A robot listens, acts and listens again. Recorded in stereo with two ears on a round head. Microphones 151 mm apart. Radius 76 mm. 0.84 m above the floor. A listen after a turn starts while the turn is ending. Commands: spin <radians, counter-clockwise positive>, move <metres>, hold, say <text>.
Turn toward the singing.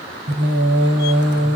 spin -1.22
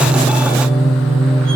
say Facing the singing.